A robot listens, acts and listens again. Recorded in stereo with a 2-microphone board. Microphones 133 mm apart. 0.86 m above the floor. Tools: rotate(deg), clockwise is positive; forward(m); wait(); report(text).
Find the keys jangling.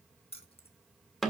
rotate(-50)
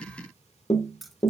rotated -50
report("Found it: keys jangling, straight ahead.")